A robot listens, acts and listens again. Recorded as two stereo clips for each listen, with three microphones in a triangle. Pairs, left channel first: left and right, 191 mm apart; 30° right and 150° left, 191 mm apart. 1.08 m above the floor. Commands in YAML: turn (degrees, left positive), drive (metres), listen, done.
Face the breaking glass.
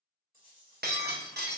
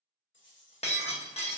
turn: -80
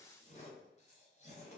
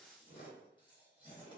done: "Facing where the breaking glass came from. I can't hear it now."